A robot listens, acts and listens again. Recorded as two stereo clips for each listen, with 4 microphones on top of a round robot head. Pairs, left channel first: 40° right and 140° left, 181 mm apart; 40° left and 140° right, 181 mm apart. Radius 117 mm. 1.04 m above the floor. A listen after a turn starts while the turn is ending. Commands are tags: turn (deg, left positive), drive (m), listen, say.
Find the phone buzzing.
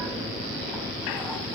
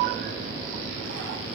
<listen/>
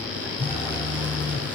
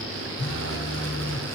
<turn deg="30"/>
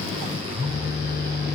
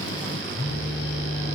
<say>Found it: a phone buzzing, straight ahead, over 4 m away.</say>